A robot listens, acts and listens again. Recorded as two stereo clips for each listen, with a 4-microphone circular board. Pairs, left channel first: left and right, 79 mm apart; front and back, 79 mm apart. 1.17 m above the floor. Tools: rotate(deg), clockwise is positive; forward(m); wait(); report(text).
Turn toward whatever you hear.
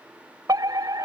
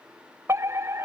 rotate(125)
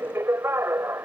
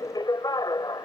rotate(30)
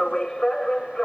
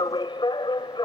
rotate(-10)
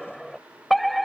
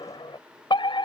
report("Found it: a fire alarm, straight ahead.")